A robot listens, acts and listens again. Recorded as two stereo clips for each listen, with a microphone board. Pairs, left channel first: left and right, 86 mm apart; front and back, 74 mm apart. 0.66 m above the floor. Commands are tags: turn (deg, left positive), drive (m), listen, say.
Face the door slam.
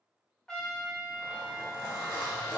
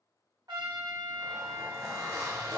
<listen/>
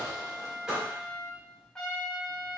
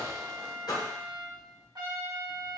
<turn deg="-10"/>
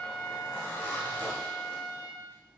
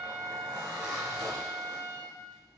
<say>Facing where the door slam came from. I can't hear it now.</say>